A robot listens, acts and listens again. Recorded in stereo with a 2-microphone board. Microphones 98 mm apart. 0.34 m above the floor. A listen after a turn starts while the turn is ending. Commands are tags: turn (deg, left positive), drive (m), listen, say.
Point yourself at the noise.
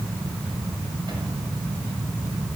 <listen/>
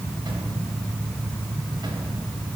<listen/>
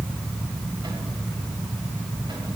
<say>I can't make out anything.</say>